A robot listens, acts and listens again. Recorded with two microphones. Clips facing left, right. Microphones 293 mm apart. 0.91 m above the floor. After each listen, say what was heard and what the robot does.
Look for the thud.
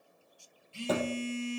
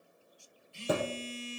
Turn 30° right.
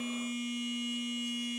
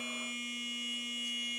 Keep listening.
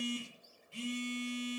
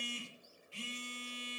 I heard a thud, but can't make it out now. It was about 15° left or 135° right.